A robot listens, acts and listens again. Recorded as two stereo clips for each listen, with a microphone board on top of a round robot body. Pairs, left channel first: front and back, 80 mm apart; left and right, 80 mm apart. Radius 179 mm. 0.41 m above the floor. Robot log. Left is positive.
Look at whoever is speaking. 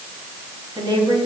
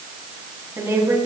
note: The woman speaking: 150° right.
cmd yaw -150
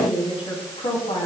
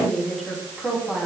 end: Found it: a woman speaking, straight ahead.